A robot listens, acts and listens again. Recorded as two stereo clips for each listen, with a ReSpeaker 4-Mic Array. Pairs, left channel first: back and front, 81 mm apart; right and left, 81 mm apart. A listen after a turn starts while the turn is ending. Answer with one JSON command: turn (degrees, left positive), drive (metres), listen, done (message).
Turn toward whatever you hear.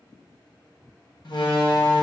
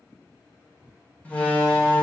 {"turn": -160}
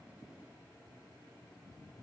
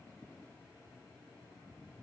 {"done": "I heard a door slam from this way, but can't make it out now."}